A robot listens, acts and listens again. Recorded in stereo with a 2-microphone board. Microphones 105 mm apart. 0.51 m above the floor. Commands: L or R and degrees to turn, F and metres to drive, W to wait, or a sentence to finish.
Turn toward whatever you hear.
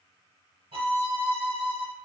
R65
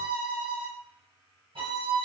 R50
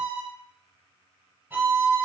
R15
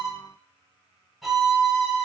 Found it: a violin, straight ahead.